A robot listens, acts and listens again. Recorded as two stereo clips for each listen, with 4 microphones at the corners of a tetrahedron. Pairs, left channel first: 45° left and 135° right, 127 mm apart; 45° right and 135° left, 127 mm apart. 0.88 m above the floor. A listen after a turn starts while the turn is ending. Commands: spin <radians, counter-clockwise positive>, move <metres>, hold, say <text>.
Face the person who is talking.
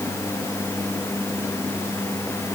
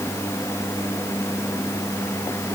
hold
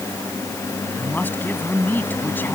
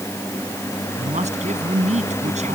spin 2.09
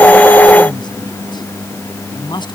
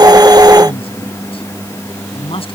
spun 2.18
say Found it: a man speaking, straight ahead.